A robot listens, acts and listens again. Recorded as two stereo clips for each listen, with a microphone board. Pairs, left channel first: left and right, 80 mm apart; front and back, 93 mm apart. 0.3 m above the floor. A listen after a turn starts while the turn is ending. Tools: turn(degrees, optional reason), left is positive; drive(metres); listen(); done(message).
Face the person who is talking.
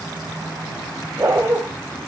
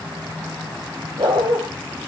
listen()
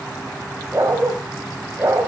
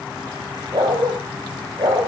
listen()
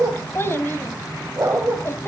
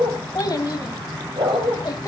turn(degrees=35, reason="The child speaking: 35° left.")
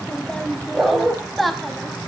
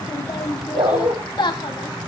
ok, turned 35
done("Found it: a child speaking, straight ahead.")